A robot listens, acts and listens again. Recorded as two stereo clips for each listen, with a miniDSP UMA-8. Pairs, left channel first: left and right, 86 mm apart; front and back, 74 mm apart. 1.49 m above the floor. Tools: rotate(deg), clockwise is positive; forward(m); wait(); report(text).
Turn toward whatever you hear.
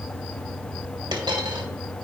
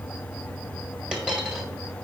rotate(105)
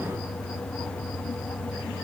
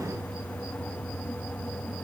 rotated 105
report("Facing where the dropped coin came from. I can't hear it now.")